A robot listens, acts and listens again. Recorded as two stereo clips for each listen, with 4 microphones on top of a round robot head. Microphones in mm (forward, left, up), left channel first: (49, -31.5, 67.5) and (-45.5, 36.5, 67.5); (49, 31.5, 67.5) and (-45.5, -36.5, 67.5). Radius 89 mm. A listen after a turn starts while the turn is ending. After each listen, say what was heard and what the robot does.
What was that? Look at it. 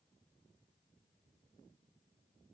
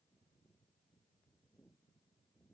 Keep listening.
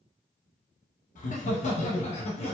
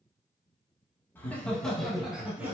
The laughter: 70° right. Turn 70° right.
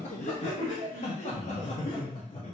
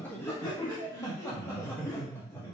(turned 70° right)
The laughter is now 35° right. Turn 35° right.
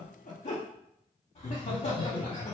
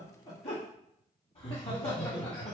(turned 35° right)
Found it: laughter, straight ahead.